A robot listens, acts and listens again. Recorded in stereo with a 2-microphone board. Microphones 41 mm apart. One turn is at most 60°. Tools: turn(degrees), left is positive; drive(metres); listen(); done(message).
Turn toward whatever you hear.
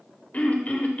turn(degrees=40)
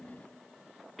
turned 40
done("Facing the throat clearing.")